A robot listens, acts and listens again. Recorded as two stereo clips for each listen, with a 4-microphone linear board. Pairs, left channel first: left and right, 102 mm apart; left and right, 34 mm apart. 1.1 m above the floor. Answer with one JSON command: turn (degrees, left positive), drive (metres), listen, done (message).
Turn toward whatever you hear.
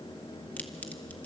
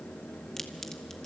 {"listen": true}
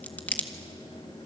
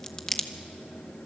{"turn": 15}
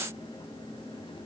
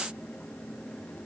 {"listen": true}
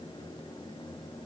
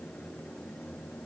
{"done": "I heard a crack, but can't make it out now. It was about straight ahead or 150° left."}